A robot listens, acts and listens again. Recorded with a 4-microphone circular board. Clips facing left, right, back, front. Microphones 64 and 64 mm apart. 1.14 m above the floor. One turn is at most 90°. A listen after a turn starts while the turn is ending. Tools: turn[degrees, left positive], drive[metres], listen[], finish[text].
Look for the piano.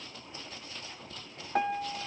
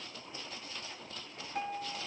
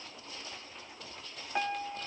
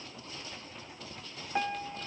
Thought: The piano: 90° left.
Action: turn[90]
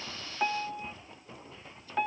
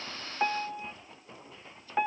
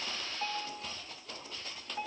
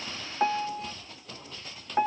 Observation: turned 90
Thought: The piano is now 20° right.
Action: turn[-20]
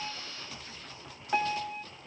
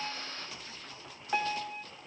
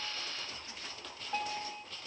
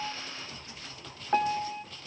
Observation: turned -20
Action: finish[Found it: a piano, straight ahead, under 1 m away.]